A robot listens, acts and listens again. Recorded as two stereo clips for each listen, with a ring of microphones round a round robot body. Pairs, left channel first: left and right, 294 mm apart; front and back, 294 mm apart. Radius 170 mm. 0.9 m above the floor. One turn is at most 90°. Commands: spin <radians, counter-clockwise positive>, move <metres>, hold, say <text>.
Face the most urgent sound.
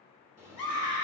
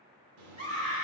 spin 1.57
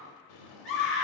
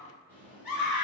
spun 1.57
say Facing the scream, 1 to 2 m away.